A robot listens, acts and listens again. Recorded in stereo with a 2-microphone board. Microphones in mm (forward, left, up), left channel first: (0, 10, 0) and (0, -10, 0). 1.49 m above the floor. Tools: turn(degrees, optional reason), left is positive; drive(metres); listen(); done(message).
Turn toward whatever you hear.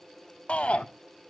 turn(degrees=90)
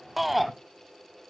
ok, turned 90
done("Found it: a shout, straight ahead.")